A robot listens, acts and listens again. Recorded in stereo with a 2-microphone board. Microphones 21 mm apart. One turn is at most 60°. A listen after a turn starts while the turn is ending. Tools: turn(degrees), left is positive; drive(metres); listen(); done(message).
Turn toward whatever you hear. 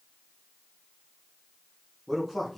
turn(degrees=30)
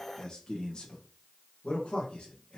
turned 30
turn(degrees=60)
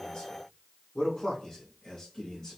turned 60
turn(degrees=35)
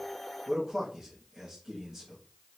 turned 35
turn(degrees=-10)
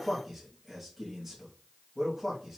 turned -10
done("Found it: a man speaking, straight ahead, 2 to 4 m away.")